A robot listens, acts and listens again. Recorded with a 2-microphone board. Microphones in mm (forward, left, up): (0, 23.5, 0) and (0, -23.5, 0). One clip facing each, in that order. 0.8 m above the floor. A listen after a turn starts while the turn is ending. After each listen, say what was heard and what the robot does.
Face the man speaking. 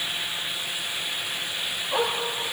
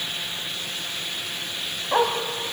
Keep listening.
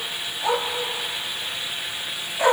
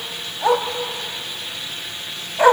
Keep listening.
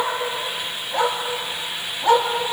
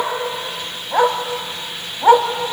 I can't make out a man speaking to turn to.